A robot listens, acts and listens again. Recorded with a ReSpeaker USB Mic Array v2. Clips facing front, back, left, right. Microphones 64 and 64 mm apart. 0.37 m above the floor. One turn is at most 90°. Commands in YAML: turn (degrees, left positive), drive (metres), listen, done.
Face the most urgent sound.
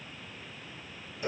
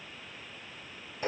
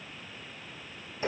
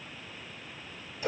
listen: true
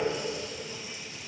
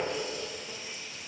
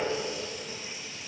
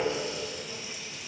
listen: true
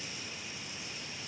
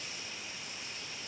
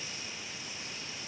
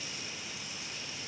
done: "I can't make out anything urgent to turn to."